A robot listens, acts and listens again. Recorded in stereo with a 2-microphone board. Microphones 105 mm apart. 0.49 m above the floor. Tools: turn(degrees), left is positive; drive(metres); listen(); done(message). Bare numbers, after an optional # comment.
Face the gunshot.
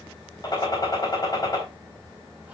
# The gunshot: about 40° left or 140° left.
turn(40)
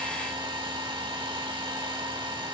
listen()
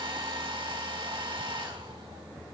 done("I heard a gunshot, but can't make it out now. It was about straight ahead or 100° left.")